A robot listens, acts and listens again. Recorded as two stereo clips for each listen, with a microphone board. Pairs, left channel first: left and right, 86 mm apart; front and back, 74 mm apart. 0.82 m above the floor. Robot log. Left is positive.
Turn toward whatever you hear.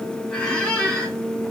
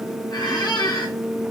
note: The squeak: 10° left.
cmd yaw +10
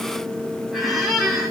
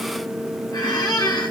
end: Facing the squeak.